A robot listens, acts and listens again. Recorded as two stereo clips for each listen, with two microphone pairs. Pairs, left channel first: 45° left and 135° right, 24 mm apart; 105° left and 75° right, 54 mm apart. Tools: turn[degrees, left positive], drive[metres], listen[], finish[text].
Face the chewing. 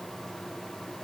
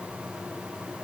Action: listen[]
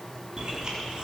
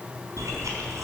Thought: The chewing: 70° right.
Action: turn[-70]
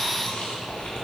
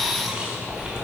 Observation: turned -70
Action: finish[Found it: chewing, straight ahead.]